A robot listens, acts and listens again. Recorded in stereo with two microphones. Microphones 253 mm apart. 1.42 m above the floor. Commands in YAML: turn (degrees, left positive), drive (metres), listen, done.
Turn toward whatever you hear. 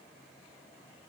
listen: true
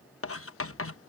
turn: 60
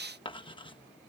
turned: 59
turn: 20
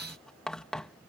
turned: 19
done: "Facing the writing."